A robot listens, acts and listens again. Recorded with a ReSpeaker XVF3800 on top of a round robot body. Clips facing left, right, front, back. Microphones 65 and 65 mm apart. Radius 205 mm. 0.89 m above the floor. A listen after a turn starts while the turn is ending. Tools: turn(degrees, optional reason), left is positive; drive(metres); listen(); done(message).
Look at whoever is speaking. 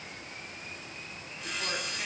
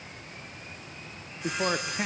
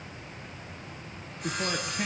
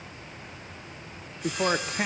turn(degrees=-140, reason="The man speaking: 140° right.")
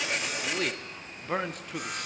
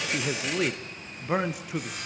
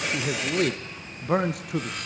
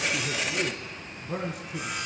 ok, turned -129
turn(degrees=-10, reason="The man speaking is now 10° right.")
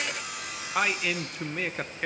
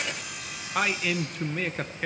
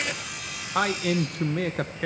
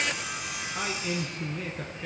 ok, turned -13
done("Found it: a man speaking, straight ahead.")